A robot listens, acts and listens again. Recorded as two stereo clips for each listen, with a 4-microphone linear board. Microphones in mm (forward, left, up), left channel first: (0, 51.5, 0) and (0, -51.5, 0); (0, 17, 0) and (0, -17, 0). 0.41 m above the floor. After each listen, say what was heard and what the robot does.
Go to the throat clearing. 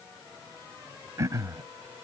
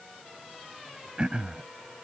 The throat clearing: about 30° right or 150° right. Turn 30° right.
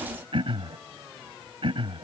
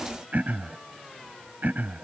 So it is at 115° right. Turn 115° right.
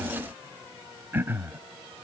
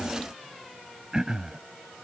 The throat clearing is now 25° right. Turn 25° right.
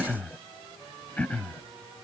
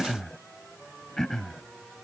The throat clearing is now 15° left. Turn 15° left.
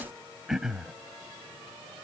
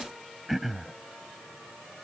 Drive 1.0 m forward.
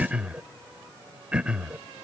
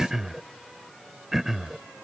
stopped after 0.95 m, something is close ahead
The throat clearing is now 15° right. Turn 15° right.
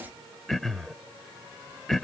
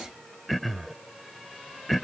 Arrived at the throat clearing, straight ahead.